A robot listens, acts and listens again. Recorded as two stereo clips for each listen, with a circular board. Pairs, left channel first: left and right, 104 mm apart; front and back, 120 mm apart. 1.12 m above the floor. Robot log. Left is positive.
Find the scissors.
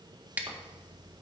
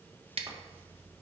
note: The scissors: 165° right.
cmd yaw -165
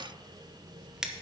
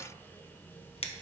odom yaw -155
end: Found it: scissors, straight ahead, under 1 m away.